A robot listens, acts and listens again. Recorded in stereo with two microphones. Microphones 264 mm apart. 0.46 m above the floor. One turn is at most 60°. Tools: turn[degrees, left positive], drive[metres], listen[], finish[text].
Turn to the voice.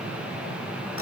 Action: listen[]
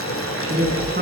Thought: The woman speaking: about 40° right or 140° right.
Action: turn[-40]
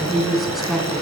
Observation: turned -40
Action: finish[Facing the woman speaking.]